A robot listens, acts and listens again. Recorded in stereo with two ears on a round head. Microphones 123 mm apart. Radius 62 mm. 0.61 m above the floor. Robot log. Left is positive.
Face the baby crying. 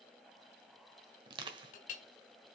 cmd idle
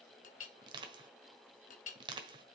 cmd idle
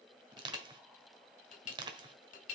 end: I can't make out a baby crying to turn to.